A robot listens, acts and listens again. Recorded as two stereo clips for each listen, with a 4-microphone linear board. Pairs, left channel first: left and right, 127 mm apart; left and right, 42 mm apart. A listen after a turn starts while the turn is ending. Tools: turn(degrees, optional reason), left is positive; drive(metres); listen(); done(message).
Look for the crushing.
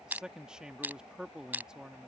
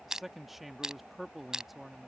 turn(degrees=-30)
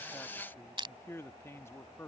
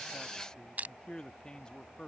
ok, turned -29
turn(degrees=-135, reason="So it is at 135° right.")
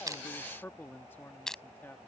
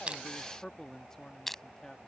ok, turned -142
done("Facing the crushing.")